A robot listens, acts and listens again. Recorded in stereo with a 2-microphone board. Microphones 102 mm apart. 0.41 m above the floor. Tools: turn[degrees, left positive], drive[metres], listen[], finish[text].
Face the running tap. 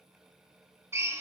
Action: listen[]
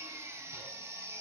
Action: listen[]
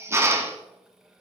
Action: finish[I can't make out a running tap, only a drill.]